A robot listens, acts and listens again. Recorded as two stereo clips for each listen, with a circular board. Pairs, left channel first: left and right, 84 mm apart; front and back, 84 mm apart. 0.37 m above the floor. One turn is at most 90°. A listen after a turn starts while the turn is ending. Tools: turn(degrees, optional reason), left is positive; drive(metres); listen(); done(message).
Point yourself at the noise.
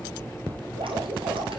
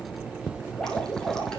turn(degrees=-85, reason="The dripping: 85° right.")
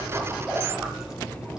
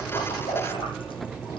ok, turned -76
done("Found it: dripping, straight ahead.")